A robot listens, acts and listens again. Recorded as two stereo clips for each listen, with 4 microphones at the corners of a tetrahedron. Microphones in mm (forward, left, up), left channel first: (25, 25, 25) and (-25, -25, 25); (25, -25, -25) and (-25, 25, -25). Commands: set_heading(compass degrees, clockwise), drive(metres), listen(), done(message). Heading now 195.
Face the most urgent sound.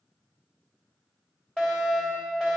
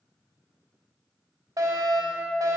set_heading(65)
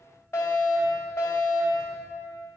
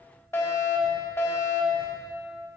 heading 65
done("Facing the fire alarm, 2 to 4 m away.")